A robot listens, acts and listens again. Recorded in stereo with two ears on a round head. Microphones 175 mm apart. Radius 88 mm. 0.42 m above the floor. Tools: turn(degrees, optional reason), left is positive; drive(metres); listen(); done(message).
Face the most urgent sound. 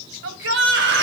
turn(degrees=-65, reason="The shout: about 65° right or 115° right.")
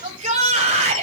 turn(degrees=-40, reason="So it is at 40° right.")
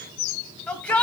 done("Facing the shout.")